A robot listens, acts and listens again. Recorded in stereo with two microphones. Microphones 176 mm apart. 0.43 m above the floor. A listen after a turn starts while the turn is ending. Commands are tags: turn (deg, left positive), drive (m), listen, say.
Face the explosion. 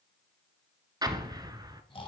<turn deg="-25"/>
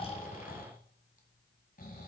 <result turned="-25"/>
<listen/>
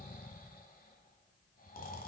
<say>I heard an explosion, but can't make it out now. It was about straight ahead or 130° right.</say>